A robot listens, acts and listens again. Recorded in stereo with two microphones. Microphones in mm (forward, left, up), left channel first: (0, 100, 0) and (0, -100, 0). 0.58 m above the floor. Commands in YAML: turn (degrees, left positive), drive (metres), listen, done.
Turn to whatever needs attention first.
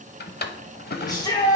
turn: 20
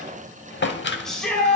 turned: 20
done: "Found it: a shout, straight ahead, 1 to 2 m away."